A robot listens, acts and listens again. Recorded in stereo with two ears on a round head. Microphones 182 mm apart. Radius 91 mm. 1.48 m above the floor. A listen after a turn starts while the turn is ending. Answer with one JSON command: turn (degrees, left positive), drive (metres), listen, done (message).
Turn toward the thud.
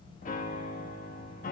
{"listen": true}
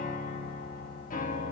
{"listen": true}
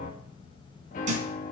{"turn": -35}
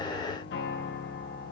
{"listen": true}
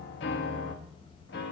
{"done": "I heard a thud, but can't make it out now. It was about straight ahead or 110° right."}